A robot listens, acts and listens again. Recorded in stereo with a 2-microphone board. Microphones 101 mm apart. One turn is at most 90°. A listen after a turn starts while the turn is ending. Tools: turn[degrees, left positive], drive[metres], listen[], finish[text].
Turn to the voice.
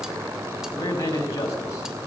Thought: The man speaking: about 35° left or 145° left.
Action: turn[35]
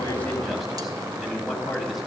Action: finish[Facing the man speaking.]